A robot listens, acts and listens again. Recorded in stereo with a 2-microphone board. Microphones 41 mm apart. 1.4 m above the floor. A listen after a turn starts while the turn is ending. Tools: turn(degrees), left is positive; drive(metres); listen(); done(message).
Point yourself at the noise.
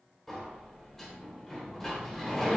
turn(degrees=30)
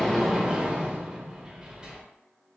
turn(degrees=-20)
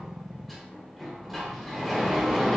done("Facing the sliding door, under 1 m away.")